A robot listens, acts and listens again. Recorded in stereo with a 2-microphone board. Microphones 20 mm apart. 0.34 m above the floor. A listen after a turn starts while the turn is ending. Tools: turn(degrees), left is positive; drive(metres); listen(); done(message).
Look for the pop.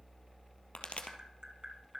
turn(degrees=70)
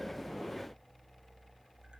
listen()
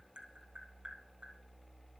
done("I heard a pop, but can't make it out now. It was about straight ahead or 40° left.")